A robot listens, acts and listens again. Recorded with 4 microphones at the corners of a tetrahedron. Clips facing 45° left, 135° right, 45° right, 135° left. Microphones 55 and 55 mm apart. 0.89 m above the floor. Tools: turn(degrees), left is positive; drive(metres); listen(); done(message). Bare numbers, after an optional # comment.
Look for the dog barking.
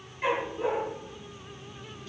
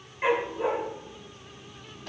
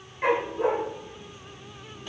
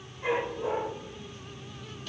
# The dog barking: 65° right.
turn(-65)
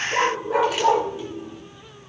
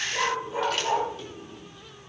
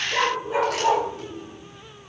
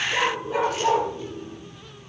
# The dog barking is now 30° left.
turn(30)
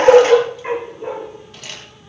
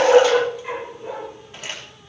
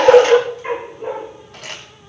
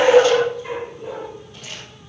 done("Found it: a dog barking, straight ahead, over 4 m away.")